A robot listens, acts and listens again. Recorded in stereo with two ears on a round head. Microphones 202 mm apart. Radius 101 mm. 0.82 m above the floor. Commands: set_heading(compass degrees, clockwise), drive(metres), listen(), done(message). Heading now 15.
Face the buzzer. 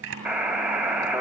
set_heading(45)
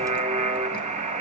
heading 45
set_heading(190)
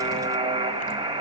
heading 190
set_heading(215)
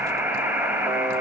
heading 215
set_heading(225)
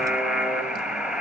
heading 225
done("Facing the buzzer.")